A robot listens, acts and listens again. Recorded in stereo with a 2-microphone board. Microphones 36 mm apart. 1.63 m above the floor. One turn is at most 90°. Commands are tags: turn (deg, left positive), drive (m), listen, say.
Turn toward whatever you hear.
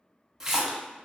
<turn deg="-30"/>
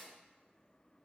<listen/>
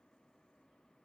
<say>I heard a splash, but can't make it out now. It was about 15° left or 135° right.</say>